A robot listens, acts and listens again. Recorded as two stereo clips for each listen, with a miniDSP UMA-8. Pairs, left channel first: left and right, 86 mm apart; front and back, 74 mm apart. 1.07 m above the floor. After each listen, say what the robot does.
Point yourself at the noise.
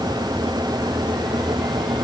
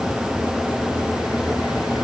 Keep listening.
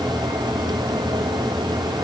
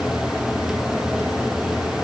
Keep listening.
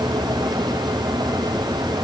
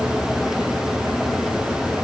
I can't make out anything.